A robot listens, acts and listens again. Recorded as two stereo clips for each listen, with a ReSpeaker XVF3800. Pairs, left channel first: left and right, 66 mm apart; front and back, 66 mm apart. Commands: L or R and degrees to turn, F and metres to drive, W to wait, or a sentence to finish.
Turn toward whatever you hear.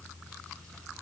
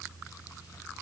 W
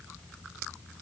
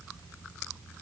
W
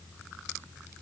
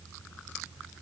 I can't make out anything to turn to.